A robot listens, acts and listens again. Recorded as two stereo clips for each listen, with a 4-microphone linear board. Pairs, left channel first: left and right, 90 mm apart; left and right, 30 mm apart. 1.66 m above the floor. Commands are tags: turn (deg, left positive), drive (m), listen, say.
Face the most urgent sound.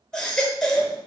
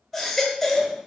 <turn deg="30"/>
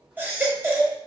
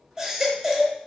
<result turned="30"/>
<turn deg="-20"/>
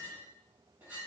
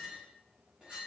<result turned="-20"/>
<listen/>
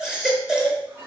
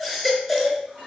<say>Facing the baby crying.</say>